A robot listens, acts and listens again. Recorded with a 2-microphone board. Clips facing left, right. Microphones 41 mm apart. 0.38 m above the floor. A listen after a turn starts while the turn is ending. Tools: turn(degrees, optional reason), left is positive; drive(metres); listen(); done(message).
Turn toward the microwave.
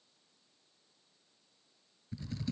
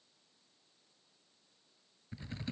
listen()
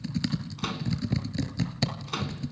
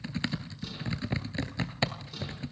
turn(degrees=70, reason="The microwave: about 70° left or 110° left.")
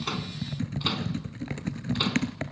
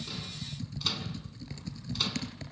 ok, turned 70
listen()
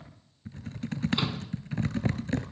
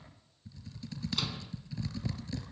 listen()
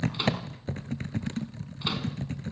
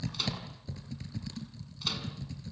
turn(degrees=30, reason="So it is at 30° left.")
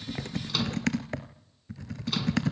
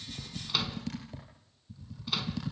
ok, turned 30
listen()
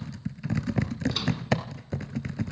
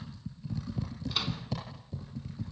listen()
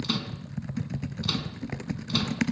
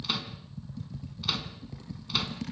done("I heard a microwave from this way, but can't make it out now.")